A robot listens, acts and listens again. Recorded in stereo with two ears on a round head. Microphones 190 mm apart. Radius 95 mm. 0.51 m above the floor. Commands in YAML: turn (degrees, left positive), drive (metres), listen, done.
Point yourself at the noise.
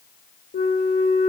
turn: 35
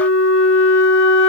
turn: 105
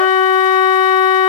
turn: 40
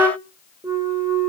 turn: -10
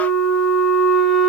done: "Found it: a flute, straight ahead."